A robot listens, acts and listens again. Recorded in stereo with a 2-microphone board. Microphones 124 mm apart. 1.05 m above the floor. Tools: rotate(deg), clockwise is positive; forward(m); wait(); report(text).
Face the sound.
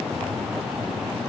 wait()
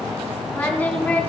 rotate(-30)
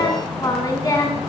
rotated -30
rotate(-150)
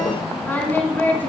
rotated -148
rotate(-15)
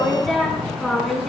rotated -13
report("Facing the singing, over 4 m away.")